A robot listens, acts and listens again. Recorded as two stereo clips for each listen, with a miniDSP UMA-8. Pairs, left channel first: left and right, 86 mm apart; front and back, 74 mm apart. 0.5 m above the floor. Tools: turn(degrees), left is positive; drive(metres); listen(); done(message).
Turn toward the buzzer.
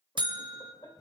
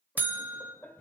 turn(degrees=-115)
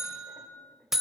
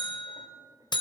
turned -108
done("Facing the buzzer, under 1 m away.")